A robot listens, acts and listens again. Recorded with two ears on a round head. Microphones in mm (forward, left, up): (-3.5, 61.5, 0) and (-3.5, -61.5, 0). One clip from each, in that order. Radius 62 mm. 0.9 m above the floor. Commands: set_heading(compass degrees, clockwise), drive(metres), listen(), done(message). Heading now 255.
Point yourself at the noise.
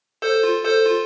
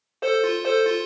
set_heading(180)
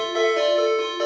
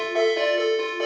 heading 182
set_heading(162)
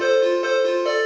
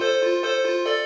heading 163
done("Facing the ringtone, under 1 m away.")